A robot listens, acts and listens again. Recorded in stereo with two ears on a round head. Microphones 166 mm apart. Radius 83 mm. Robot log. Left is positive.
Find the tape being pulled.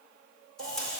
cmd yaw +30
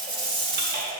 note: So it is at 25° right.
cmd yaw -25
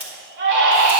note: The tape being pulled is now 10° right.
cmd yaw -10
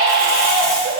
cmd idle
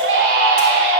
cmd idle
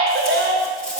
end: Facing where the tape being pulled came from. I can't hear it now.